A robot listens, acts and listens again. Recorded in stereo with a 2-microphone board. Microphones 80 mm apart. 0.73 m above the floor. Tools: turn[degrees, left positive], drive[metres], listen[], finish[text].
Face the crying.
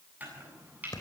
Action: listen[]
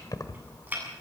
Action: listen[]
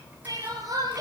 Thought: The crying: about 55° right or 125° right.
Action: turn[-55]
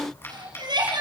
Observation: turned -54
Thought: So it is at 75° right.
Action: turn[-75]
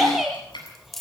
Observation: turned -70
Action: finish[Found it: crying, straight ahead.]